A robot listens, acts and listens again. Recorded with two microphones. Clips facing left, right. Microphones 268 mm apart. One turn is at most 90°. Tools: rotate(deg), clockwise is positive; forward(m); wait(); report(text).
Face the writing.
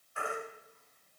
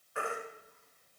wait()
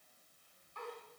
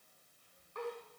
wait()
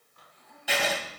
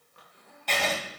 rotate(-30)
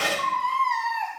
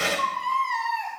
rotate(25)
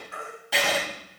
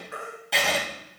report("Facing the writing.")